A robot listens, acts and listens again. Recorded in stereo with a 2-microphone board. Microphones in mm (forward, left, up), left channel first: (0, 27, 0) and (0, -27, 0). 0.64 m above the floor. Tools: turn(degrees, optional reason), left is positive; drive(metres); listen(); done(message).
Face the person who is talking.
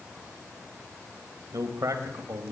turn(degrees=-70, reason="The man speaking: about 70° right or 110° right.")
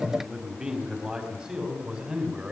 turn(degrees=-15, reason="So it is at 15° right.")
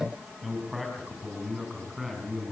done("Found it: a man speaking, straight ahead, over 4 m away.")